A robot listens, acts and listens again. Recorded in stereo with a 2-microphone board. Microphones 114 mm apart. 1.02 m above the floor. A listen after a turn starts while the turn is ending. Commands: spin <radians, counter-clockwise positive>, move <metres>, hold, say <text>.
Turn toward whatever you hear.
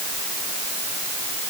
hold
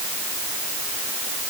hold
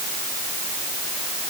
say I can't make out anything to turn to.